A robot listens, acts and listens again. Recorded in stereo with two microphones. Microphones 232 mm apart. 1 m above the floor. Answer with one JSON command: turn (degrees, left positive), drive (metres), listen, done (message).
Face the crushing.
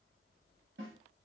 {"listen": true}
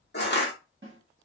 {"turn": 45}
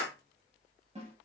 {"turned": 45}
{"done": "Facing the crushing."}